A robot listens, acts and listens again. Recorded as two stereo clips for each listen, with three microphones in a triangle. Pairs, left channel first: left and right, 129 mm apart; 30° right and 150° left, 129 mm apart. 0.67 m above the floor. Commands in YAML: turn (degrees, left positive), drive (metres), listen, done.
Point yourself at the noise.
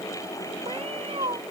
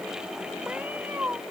turn: -135
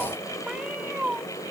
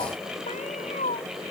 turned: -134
turn: -10
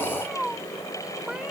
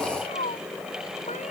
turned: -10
done: "Found it: a cat meowing, straight ahead."